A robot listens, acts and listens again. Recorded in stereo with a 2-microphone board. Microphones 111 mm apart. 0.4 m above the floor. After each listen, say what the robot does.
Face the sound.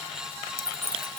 Turn 25° right.
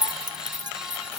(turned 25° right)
Turn 40° right.
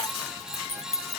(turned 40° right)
Turn 110° right.
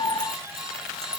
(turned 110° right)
Keep listening.
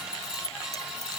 Keep listening.
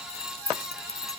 Turn 25° right.
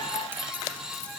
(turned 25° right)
Keep listening.
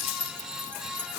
Turn 20° right.
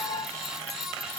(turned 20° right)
Keep listening.
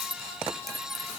Found it: keys jangling, straight ahead.